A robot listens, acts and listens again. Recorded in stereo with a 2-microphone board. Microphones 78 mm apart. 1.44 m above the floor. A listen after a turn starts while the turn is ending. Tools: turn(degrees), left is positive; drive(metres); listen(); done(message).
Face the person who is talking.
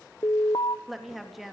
turn(degrees=30)
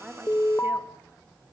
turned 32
listen()
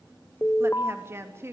turn(degrees=-35)
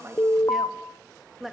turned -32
done("Found it: a woman speaking, straight ahead, 2 to 4 m away.")